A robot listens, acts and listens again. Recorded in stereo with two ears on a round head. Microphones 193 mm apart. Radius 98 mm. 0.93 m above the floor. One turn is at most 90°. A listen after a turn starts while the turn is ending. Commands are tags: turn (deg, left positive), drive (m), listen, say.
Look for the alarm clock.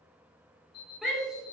<turn deg="45"/>
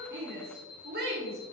<turn deg="90"/>
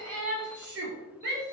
<listen/>
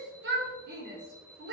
<listen/>
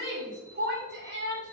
<say>I heard an alarm clock from this way, but can't make it out now.</say>